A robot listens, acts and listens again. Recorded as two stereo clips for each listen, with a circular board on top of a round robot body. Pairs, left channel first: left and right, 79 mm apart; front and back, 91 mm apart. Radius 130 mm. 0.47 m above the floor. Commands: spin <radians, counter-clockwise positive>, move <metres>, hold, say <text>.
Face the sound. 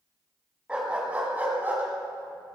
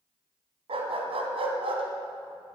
spin -2.79
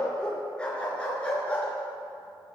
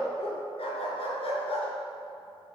spin 0.26
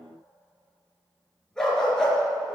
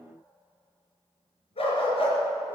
say Facing the dog barking, over 4 m away.